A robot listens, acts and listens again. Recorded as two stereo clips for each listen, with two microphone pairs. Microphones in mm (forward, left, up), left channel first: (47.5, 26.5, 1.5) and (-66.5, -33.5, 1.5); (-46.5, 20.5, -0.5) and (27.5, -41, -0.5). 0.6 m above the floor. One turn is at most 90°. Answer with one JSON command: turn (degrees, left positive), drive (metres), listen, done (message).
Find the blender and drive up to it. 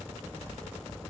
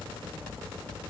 {"listen": true}
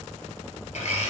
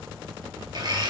{"drive": 1.0}
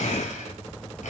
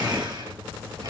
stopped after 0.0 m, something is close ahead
{"done": "Blocked. The blender is further on, straight ahead."}